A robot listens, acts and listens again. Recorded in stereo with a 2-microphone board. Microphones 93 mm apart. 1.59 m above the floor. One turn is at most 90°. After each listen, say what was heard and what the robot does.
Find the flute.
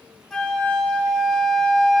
Turn 30° left.
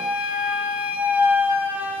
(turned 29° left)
So it is at 20° right. Turn 20° right.
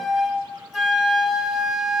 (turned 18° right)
Found it: a flute, straight ahead.